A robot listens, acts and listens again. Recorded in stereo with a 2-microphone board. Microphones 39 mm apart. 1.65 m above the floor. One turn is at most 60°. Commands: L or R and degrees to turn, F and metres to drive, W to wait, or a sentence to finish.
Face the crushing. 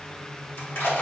L60
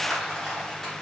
Facing the crushing.